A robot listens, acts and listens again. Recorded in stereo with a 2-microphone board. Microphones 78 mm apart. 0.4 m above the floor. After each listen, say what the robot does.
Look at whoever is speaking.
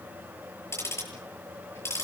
Keep listening.
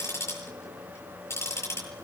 Keep listening.
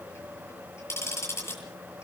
I can't make out anyone speaking, only ticking.